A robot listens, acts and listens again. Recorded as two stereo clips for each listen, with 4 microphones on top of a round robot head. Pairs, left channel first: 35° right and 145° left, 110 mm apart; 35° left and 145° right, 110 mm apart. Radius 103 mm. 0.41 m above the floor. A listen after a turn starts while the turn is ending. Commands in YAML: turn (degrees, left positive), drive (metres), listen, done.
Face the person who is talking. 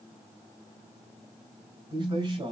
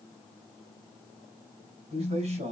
turn: -170
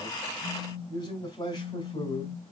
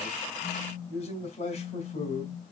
turn: 15
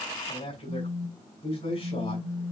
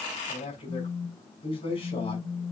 done: "Facing the man speaking."